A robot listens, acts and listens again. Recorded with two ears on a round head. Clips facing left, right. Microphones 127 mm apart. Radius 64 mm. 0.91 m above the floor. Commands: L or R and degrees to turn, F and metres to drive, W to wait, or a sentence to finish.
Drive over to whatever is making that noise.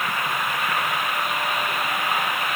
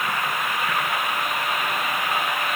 W
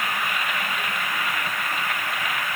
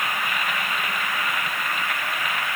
W
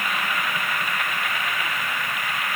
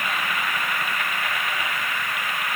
I can't make out anything to turn to.